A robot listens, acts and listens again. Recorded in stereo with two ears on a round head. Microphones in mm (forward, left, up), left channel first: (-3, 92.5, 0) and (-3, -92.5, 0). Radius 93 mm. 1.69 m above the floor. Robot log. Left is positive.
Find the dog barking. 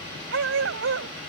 note: The dog barking: about 65° right or 115° right.
cmd yaw -65
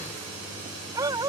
note: So it is at 20° right.
cmd yaw -20
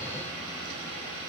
cmd idle
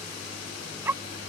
note: The dog barking is now 10° right.
cmd yaw -10
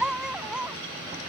end: Facing the dog barking.